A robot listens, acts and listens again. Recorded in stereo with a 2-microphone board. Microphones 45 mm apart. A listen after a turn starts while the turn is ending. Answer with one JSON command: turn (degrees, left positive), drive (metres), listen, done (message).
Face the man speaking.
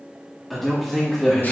{"turn": 30}
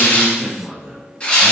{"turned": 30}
{"done": "Facing the man speaking, 1 to 2 m away."}